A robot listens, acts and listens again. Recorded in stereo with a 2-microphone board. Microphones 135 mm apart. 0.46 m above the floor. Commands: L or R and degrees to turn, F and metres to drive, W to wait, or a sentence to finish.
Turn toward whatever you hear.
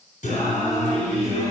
L65
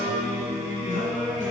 L70
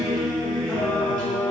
L10
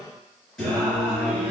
L10
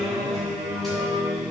Found it: singing, straight ahead.